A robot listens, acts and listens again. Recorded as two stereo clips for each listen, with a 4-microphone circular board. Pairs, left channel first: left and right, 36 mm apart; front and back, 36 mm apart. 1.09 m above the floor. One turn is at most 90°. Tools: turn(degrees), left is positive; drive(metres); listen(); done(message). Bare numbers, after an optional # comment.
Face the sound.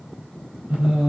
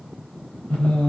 # The singing: 30° right.
turn(-30)
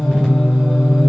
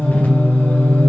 done("Found it: singing, straight ahead, over 4 m away.")